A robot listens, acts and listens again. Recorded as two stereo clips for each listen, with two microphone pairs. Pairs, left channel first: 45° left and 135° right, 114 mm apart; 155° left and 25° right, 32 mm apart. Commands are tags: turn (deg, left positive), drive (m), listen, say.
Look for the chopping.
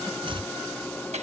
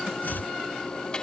<turn deg="180"/>
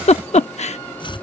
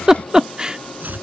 <say>Facing the chopping.</say>